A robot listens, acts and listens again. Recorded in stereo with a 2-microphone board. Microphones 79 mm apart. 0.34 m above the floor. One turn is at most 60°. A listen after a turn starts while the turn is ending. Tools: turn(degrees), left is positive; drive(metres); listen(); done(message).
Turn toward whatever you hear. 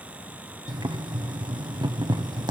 turn(degrees=-60)
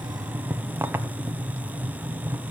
turn(degrees=-30)
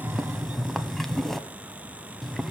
done("Found it: boiling, straight ahead, 1 to 2 m away.")